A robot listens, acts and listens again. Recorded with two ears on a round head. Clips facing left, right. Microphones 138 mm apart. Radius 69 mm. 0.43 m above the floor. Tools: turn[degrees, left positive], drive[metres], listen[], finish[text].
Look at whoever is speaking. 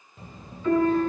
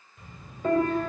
Thought: The child speaking: about 30° left or 150° left.
Action: turn[30]
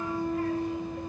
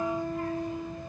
Thought: So it is at 120° left.
Action: turn[120]
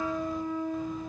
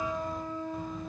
Action: listen[]
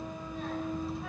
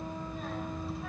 Action: finish[Facing the child speaking, under 1 m away.]